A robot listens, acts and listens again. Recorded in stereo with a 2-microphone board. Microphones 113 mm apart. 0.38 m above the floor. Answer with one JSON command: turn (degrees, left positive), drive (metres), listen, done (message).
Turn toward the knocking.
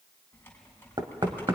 {"turn": -40}
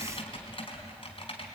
{"listen": true}
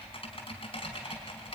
{"listen": true}
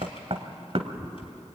{"turn": -95}
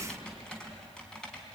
{"listen": true}
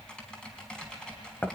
{"turn": 20}
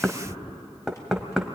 {"done": "Found it: knocking, straight ahead, 1 to 2 m away."}